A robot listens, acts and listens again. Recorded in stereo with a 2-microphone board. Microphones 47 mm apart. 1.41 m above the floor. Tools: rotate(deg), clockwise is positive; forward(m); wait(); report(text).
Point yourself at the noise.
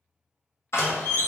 rotate(-65)
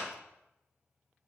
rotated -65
wait()
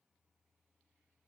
report("I heard a door slam, but can't make it out now. It was about straight ahead or 50° left.")